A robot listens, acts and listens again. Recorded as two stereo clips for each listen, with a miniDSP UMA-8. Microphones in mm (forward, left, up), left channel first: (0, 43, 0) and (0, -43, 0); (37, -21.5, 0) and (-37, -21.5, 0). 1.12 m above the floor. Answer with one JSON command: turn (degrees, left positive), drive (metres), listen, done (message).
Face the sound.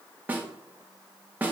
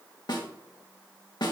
{"turn": -20}
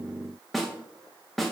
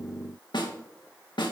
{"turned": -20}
{"done": "Found it: a snare drum, straight ahead."}